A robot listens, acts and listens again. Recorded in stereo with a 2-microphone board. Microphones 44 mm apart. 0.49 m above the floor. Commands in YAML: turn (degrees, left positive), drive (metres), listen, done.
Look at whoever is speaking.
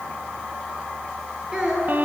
turn: -30
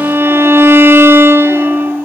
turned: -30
listen: true
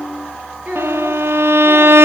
turn: -135
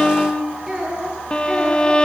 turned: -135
turn: -10
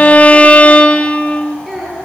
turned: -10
done: "Facing the child speaking, over 4 m away."